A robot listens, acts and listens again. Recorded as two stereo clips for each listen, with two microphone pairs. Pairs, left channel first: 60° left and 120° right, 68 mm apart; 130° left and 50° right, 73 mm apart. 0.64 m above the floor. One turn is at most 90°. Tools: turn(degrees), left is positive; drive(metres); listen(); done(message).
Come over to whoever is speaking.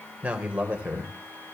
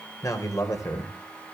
turn(degrees=90)
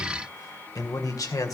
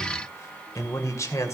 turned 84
turn(degrees=85)
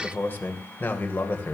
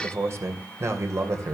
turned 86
drive(metres=1.0)
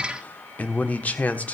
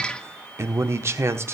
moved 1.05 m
drive(metres=1.0)
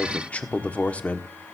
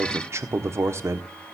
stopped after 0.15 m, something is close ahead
done("I am next to the man speaking.")